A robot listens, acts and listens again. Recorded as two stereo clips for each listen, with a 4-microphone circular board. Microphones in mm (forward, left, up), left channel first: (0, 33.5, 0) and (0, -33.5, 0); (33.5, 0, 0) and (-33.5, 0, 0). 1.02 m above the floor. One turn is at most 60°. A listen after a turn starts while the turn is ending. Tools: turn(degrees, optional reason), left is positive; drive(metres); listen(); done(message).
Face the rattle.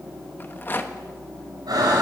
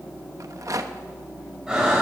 turn(degrees=60, reason="The rattle: 145° left.")
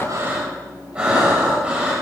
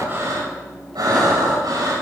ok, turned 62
turn(degrees=60, reason="Nothing new. It was at 85° left.")
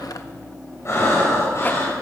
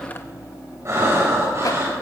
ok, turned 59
turn(degrees=25, reason="Nothing new. It was at 25° left.")
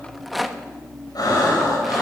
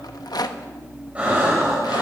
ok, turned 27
done("Facing the rattle.")